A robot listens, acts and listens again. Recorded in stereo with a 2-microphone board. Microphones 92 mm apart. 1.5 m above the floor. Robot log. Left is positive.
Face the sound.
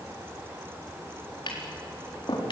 note: The tapping: about 65° left or 115° left.
cmd yaw +65
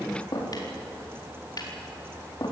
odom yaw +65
note: So it is at 50° left.
cmd yaw +50
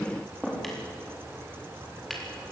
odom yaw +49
end: Found it: tapping, straight ahead.